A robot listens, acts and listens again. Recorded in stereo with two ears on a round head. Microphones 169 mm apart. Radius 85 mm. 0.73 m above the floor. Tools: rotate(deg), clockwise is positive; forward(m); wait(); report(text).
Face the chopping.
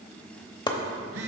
rotate(-25)
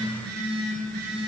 wait()
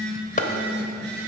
rotate(-130)
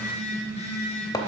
rotate(-20)
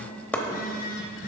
rotate(-10)
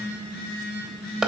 report("Found it: chopping, straight ahead.")